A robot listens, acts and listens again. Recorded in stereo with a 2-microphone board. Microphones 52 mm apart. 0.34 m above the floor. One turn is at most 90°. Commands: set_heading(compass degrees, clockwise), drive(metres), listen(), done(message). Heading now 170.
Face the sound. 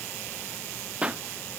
set_heading(195)
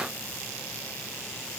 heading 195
listen()
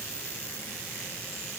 done("I heard a pop, but can't make it out now. It was about straight ahead or 130° right.")